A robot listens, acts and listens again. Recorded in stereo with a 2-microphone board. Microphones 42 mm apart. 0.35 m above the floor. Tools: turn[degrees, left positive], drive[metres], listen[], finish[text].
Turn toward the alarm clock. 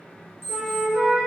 Thought: The alarm clock: about 70° right or 110° right.
Action: turn[-70]
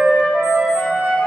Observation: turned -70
Action: listen[]
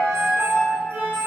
Action: listen[]
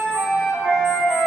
Action: finish[I heard an alarm clock, but can't make it out now. It was about straight ahead or 40° right.]